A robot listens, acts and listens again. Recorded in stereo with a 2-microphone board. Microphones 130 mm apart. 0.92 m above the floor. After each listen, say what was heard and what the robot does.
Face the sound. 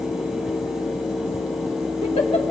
The giggle: about 55° left or 125° left. Turn 55° left.
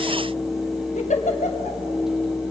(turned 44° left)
So it is at 75° left. Turn 75° left.
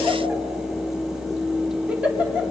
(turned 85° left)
The giggle is now 10° right. Turn 10° right.
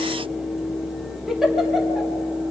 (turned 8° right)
Found it: a giggle, straight ahead.